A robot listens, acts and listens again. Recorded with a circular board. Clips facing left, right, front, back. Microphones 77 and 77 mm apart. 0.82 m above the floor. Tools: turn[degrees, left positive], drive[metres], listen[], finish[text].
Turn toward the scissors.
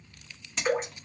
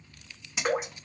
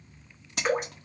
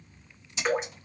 Action: finish[Facing the scissors.]